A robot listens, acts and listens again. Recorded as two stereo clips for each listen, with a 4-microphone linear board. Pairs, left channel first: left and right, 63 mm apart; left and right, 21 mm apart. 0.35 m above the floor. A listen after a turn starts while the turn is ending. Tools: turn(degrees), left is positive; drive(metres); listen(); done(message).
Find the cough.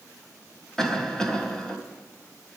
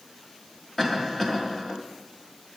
turn(degrees=30)
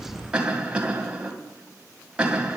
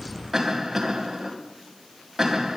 turn(degrees=-20)
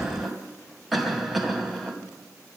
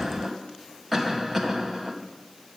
done("Found it: a cough, straight ahead.")